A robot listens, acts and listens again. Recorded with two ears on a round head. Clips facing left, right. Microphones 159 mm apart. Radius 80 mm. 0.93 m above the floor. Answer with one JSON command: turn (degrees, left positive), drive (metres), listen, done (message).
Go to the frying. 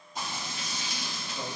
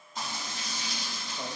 {"turn": 15}
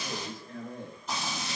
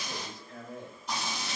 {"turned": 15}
{"drive": 1.0}
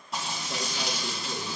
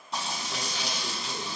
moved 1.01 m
{"drive": 1.0}
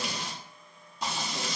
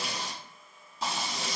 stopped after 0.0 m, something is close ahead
{"done": "Arrived at the frying, straight ahead."}